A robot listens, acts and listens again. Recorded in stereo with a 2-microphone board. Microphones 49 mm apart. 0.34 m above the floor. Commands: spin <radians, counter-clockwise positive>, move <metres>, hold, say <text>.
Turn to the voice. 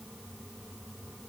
hold
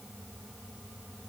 hold
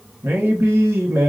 spin -1.05
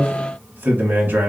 spin -0.79
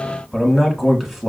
say Found it: a man speaking, straight ahead, 1 to 2 m away.